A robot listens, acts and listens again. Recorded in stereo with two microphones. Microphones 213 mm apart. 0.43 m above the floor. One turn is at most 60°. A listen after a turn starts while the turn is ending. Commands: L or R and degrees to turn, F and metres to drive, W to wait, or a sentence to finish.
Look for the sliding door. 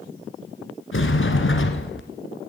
L60
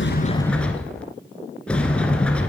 Facing the sliding door.